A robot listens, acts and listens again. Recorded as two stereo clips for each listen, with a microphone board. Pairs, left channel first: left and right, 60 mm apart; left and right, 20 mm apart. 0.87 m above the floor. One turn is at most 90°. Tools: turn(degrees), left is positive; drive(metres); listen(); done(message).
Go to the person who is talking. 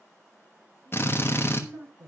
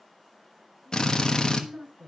turn(degrees=-60)
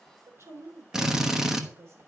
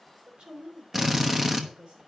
turn(degrees=-55)
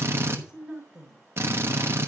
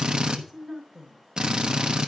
turn(degrees=-15)
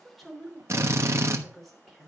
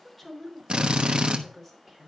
drive(metres=1.0)
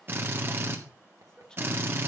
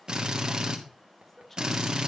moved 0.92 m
turn(degrees=10)
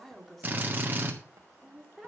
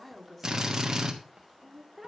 drive(metres=1.0)
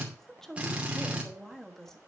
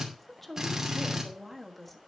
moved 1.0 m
drive(metres=1.0)
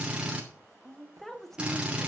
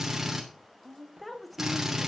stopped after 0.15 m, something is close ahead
done("Arrived at the woman speaking, straight ahead.")